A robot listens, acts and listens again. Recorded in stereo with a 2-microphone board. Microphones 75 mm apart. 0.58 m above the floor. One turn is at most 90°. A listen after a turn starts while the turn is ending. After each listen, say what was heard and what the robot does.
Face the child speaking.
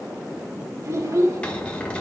The child speaking: about 50° right or 130° right. Turn 50° right.
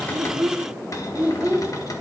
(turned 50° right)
So it is at 15° right. Turn 15° right.
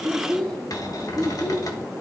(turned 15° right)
The child speaking is now 20° left. Turn 20° left.
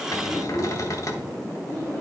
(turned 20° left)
The child speaking is now 20° left. Turn 20° left.
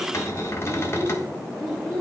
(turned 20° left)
Found it: a child speaking, straight ahead, 2 to 4 m away.